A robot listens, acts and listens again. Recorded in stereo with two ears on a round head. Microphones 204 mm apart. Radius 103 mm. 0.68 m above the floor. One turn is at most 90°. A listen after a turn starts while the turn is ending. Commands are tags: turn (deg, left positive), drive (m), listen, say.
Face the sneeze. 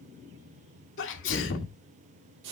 <turn deg="60"/>
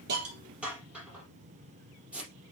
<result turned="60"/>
<listen/>
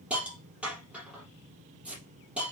<say>I heard a sneeze, but can't make it out now. It was about straight ahead or 60° left.</say>